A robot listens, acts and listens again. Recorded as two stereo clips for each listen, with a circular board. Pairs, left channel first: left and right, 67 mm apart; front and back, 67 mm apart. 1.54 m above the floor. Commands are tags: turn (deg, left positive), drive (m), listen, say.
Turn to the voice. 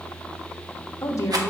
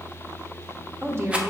<turn deg="130"/>
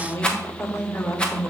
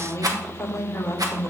<turn deg="45"/>
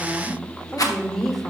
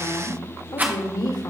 <say>Facing the woman speaking.</say>